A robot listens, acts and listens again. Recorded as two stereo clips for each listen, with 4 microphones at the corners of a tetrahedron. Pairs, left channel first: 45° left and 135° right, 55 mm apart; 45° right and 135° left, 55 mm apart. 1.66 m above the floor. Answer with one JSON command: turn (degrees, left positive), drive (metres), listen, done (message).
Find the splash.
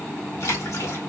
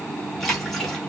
{"turn": 40}
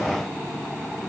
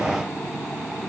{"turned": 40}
{"done": "Facing where the splash came from. I can't hear it now."}